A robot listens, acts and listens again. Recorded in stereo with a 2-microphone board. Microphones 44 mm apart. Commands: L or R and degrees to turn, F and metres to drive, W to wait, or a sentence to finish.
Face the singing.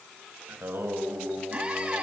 R60
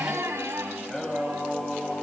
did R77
L20
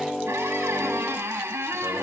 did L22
Facing the singing, over 4 m away.